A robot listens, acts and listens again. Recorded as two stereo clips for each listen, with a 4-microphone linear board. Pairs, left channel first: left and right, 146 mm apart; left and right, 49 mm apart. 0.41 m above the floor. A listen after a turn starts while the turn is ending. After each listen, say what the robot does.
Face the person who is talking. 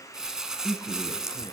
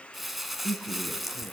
Turn 30° left.
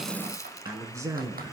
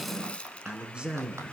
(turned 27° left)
Turn 20° right.
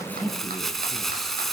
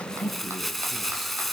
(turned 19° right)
Facing the man speaking.